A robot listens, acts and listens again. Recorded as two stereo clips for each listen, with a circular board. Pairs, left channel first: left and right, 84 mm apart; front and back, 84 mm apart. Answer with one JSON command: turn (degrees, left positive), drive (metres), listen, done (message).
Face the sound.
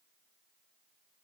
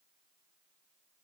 {"listen": true}
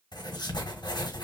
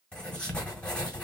{"turn": 75}
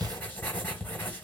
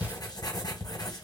{"turn": 25}
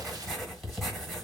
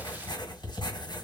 {"done": "Facing the writing."}